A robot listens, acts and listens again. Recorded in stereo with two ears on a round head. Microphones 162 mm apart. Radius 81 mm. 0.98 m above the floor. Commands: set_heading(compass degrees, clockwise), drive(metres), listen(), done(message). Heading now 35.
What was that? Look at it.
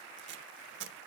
set_heading(100)
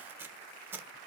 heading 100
set_heading(115)
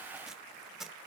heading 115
done("Facing the tape being pulled, 1 to 2 m away.")